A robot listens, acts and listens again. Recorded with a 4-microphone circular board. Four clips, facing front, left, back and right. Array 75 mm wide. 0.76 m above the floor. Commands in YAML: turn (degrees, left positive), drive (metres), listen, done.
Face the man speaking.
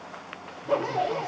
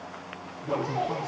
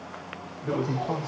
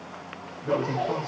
turn: -160
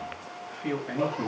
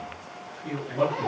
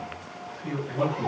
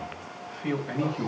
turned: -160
turn: -40
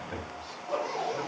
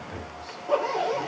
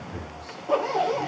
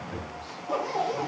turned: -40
done: "Found it: a man speaking, straight ahead, over 4 m away."